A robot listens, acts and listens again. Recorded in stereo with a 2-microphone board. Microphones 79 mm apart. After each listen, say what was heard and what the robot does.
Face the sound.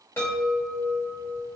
The chime: about 30° left or 150° left. Turn 30° left.
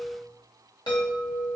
So it is at 115° left. Turn 115° left.
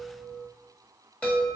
The chime is now 20° left. Turn 20° left.
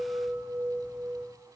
Found it: a chime, straight ahead.